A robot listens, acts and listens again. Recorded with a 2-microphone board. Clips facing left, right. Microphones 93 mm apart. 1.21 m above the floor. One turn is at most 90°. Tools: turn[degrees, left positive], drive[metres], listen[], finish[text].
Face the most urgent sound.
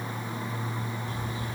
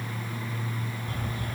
Action: listen[]
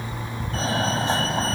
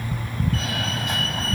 Thought: The fire alarm: about 30° left or 150° left.
Action: turn[30]
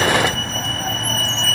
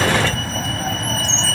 Action: finish[Facing the fire alarm.]